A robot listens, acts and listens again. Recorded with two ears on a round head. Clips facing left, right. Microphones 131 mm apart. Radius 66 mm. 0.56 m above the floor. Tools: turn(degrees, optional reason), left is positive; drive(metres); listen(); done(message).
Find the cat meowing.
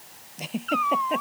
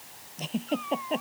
turn(degrees=90)
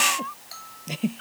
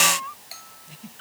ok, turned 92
done("Found it: a cat meowing, straight ahead.")